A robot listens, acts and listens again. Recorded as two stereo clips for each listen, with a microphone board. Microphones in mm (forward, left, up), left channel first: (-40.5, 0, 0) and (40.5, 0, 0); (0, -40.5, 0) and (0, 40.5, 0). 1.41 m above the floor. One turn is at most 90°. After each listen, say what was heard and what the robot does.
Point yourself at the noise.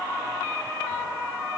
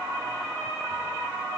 Keep listening.
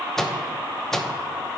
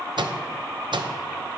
The microwave: 95° left. Turn 90° left.
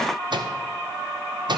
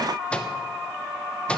The microwave is now 15° right. Turn 15° right.
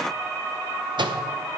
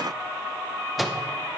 Found it: a microwave, straight ahead.